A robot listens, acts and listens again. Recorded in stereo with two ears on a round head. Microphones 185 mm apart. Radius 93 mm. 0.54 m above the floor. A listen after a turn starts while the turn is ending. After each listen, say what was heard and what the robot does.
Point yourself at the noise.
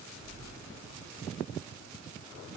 The splash: about 25° right or 155° right. Turn 25° right.
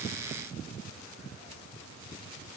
Keep listening.
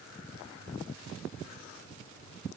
I heard a splash, but can't make it out now. It was about straight ahead or 130° right.